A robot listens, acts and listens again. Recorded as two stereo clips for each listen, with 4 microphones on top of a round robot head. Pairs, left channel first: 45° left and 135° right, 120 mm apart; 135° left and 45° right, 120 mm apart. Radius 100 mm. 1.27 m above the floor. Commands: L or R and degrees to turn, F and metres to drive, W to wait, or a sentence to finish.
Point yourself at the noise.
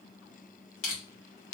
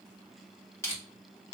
L65
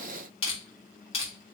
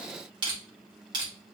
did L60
Facing the crushing, 1 to 2 m away.